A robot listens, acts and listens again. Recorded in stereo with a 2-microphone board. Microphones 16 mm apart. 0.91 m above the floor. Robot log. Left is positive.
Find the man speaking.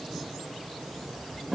cmd idle
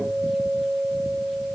cmd idle
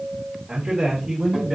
note: The man speaking: about 60° right or 120° right.
cmd yaw -60
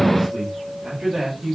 note: So it is at 40° right.
cmd yaw -40
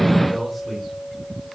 end: Facing the man speaking, over 4 m away.